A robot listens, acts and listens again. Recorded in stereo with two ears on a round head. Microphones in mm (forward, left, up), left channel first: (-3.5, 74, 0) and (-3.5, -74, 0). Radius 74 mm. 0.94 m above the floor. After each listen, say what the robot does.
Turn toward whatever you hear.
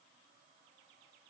Keep listening.
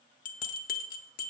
Turn 55° left.
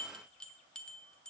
Facing the bell.